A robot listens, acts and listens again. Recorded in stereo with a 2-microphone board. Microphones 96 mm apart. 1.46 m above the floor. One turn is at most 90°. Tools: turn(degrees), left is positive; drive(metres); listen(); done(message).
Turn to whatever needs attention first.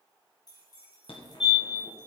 turn(degrees=70)
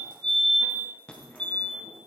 turn(degrees=10)
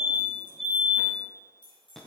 done("Facing the fire alarm.")